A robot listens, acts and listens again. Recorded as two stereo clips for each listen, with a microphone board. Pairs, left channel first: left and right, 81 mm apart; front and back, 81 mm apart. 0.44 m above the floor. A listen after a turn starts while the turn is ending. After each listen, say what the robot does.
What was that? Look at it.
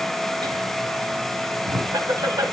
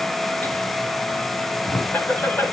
Turn 55° right.
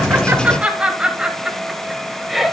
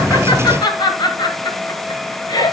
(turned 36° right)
Facing the laughter.